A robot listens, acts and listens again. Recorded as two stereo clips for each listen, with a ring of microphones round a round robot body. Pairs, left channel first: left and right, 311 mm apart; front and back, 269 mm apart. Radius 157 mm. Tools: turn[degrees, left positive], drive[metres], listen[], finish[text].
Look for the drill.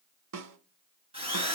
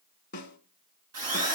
Thought: The drill: 165° right.
Action: turn[-165]
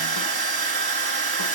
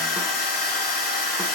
Thought: The drill is now 20° right.
Action: turn[-20]
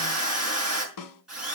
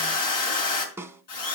Action: finish[Facing the drill, over 4 m away.]